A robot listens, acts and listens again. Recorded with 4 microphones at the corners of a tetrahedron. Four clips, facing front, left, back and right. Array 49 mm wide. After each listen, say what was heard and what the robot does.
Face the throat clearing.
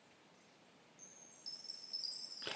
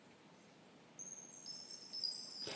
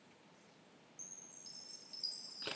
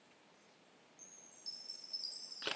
Keep listening.
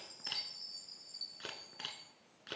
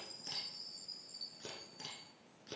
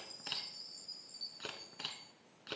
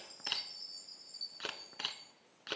Keep listening.
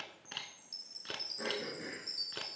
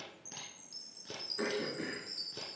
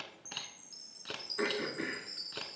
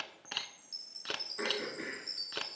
The throat clearing: straight behind. Turn 180° left.
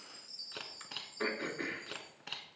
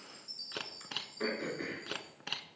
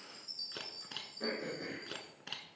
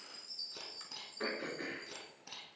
The throat clearing is now 10° right. Turn 10° right.
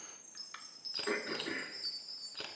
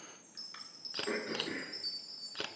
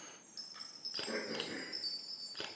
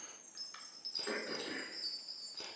Facing the throat clearing, 2 to 4 m away.